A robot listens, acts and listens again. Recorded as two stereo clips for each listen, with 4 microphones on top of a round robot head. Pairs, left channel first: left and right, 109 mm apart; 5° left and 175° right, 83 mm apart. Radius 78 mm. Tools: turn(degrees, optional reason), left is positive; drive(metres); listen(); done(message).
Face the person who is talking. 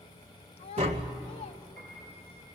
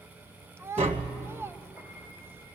turn(degrees=125, reason="The child speaking: 125° left.")
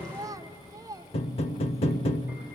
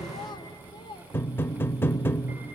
turn(degrees=-30, reason="The child speaking is now 30° right.")
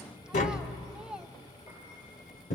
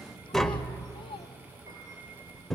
done("Found it: a child speaking, straight ahead, under 1 m away.")